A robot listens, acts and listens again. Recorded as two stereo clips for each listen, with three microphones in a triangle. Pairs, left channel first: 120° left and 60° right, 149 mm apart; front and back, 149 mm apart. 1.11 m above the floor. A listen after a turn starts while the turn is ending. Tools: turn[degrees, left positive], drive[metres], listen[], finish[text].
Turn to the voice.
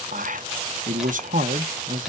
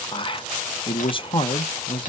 Thought: The man speaking: 50° right.
Action: turn[-50]
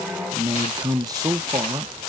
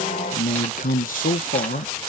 Action: finish[Facing the man speaking.]